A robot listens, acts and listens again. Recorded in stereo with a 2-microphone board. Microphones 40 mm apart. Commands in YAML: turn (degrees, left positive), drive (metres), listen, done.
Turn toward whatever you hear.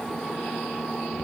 listen: true
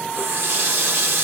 turn: -90
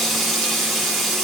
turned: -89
done: "Found it: a running tap, straight ahead."